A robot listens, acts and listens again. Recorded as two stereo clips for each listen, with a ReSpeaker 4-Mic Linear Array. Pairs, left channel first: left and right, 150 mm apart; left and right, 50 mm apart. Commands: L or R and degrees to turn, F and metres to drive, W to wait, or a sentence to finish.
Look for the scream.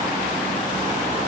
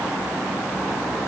W
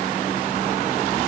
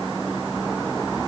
W
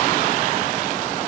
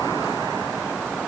I can't make out a scream.